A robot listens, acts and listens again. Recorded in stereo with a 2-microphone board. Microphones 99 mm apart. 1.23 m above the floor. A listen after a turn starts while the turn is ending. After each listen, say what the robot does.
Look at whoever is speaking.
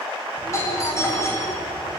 Turn 60° left.
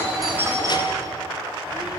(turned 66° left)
Keep listening.
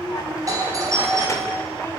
Turn 30° left.
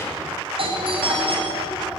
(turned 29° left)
Keep listening.
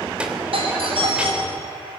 Turn 10° right.
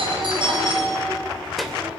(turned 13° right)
Facing the child speaking.